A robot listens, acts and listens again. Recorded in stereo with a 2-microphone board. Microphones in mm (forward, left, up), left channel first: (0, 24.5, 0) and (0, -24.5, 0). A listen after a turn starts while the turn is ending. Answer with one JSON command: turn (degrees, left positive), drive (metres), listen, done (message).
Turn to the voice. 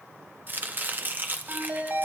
{"listen": true}
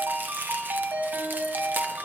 {"listen": true}
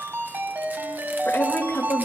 {"turn": 40}
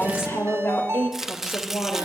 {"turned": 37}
{"turn": 100}
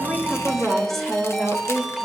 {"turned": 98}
{"done": "Facing the woman speaking, 2 to 4 m away."}